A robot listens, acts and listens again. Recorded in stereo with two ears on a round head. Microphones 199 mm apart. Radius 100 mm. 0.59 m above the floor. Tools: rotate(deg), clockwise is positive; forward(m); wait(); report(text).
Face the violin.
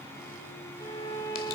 rotate(-15)
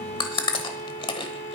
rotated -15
rotate(-145)
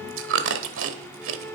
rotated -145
rotate(-10)
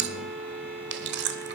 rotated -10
report("Facing the violin, under 1 m away.")